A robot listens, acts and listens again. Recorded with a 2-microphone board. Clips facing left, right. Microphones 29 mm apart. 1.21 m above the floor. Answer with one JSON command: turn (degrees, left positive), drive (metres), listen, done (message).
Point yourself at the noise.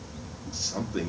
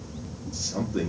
{"turn": 30}
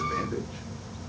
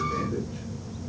{"listen": true}
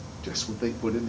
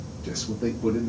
{"turn": 135}
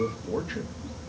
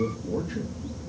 {"turn": 35}
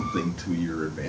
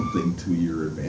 {"turn": 20}
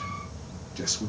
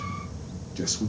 {"done": "Facing the man speaking."}